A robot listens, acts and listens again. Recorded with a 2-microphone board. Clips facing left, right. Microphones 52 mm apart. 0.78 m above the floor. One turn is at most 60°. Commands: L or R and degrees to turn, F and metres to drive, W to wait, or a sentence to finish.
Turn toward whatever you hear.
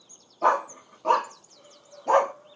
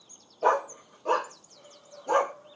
L60
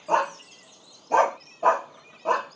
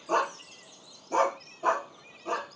L60
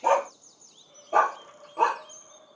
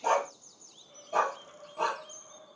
L30
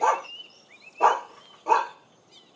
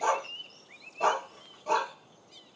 L25
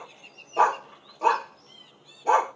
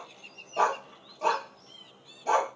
L15
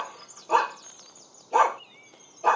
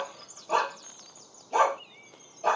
Found it: a dog barking, straight ahead.